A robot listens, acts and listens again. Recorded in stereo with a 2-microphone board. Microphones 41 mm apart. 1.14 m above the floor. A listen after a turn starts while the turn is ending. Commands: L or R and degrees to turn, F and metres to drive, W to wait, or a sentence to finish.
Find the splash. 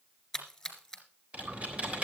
L30
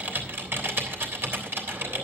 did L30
W
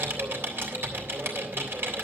I heard a splash, but can't make it out now. It was about 20° right or 140° left.